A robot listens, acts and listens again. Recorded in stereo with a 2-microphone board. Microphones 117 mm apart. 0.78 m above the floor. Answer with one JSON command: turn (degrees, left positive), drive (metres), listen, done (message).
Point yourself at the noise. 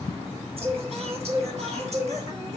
{"turn": -60}
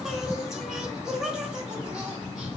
{"done": "Facing the singing, 2 to 4 m away."}